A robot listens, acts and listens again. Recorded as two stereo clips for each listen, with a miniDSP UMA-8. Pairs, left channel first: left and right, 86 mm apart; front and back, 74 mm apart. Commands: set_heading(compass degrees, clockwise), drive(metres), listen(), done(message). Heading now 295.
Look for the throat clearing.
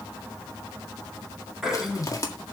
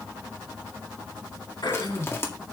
done("Found it: throat clearing, straight ahead.")